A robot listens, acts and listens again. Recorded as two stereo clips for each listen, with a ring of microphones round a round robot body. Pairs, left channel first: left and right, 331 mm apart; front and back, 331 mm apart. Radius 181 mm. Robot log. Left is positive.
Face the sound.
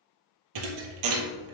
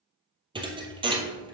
note: The thud: 105° right.
cmd yaw -105
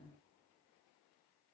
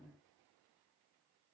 end: Facing where the thud came from. I can't hear it now.